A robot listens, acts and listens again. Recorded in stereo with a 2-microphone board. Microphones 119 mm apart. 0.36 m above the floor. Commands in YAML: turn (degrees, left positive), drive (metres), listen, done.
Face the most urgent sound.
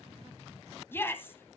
turn: 20
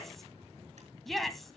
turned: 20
done: "Facing the shout."